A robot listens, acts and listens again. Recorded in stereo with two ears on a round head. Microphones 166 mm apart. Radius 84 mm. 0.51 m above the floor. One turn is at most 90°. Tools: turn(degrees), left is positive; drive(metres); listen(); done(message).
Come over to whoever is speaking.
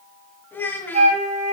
turn(degrees=30)
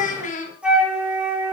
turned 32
turn(degrees=90)
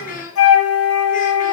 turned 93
turn(degrees=45)
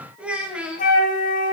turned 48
drive(metres=1.0)
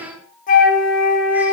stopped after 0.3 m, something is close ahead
turn(degrees=-10)
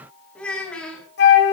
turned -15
done("Blocked. The child speaking is further on, straight ahead.")